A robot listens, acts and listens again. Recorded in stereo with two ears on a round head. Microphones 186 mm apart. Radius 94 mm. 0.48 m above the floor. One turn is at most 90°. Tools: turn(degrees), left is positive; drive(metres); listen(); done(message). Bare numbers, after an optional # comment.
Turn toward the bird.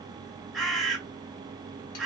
turn(30)
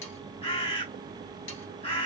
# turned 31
# So it is at 150° left.
turn(90)
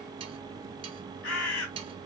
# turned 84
# The bird is now 65° left.
turn(65)
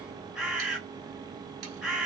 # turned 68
done("Found it: a bird, straight ahead, 1 to 2 m away.")